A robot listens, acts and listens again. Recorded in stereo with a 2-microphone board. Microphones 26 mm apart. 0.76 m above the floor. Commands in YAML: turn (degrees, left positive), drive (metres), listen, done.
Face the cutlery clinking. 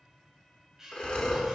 turn: -20
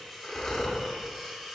done: "Found it: cutlery clinking, straight ahead, 2 to 4 m away."